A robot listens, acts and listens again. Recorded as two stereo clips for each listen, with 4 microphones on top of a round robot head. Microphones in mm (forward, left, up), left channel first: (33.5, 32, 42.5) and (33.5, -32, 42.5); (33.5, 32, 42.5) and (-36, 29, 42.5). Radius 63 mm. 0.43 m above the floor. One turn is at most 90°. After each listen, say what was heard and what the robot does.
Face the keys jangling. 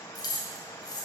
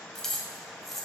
The keys jangling: 90° left. Turn 90° left.
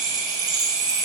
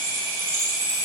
Keep listening.
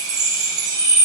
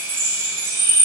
Keep listening.
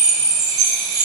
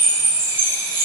I heard keys jangling from this way, but can't make it out now.